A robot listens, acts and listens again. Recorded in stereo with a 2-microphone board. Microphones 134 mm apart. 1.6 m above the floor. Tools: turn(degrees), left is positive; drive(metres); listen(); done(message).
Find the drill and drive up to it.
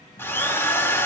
turn(degrees=15)
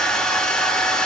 drive(metres=1.0)
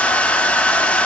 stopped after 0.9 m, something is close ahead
turn(degrees=10)
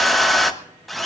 done("Arrived at the drill, straight ahead.")